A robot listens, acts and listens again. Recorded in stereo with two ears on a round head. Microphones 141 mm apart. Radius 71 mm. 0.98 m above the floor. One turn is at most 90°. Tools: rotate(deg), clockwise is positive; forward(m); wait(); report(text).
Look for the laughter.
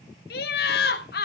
rotate(-65)
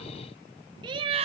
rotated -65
rotate(40)
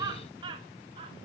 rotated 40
rotate(35)
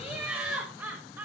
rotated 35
rotate(15)
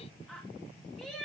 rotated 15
report("Facing the laughter.")